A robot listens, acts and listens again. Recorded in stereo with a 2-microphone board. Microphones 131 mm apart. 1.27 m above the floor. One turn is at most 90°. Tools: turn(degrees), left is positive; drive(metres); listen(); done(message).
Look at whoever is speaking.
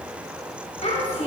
turn(degrees=55)
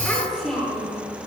done("Found it: a child speaking, straight ahead, 2 to 4 m away.")